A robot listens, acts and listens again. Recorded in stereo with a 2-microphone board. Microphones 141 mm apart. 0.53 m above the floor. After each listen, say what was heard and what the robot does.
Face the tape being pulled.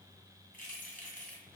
Keep listening.
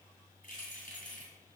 Keep listening.
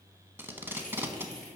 The tape being pulled: about 15° right or 165° right. Turn 15° right.
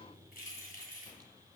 Keep listening.
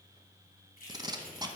So it is at 150° right. Turn 150° right.
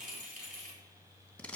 The tape being pulled is now 10° left. Turn 10° left.
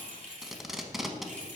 Facing the tape being pulled.